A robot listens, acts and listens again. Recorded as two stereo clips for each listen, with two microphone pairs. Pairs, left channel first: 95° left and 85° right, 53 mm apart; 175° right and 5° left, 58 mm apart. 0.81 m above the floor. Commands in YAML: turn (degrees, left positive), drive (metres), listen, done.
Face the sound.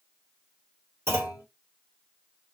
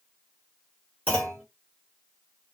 turn: -115
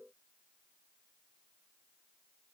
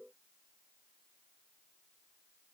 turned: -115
done: "Facing where the clunk came from. I can't hear it now."